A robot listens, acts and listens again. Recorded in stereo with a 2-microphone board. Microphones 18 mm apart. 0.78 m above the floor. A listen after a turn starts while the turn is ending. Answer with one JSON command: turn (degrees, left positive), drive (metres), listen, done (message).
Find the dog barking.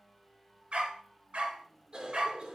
{"turn": -90}
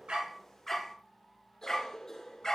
{"turn": 30}
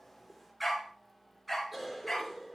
{"done": "Facing the dog barking."}